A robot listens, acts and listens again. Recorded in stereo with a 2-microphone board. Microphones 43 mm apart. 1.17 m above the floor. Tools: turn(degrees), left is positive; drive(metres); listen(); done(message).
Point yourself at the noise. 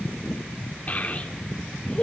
turn(degrees=30)
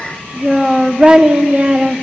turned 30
turn(degrees=-30)
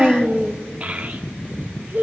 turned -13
turn(degrees=-45)
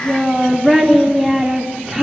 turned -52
done("Found it: a child speaking, straight ahead, 2 to 4 m away.")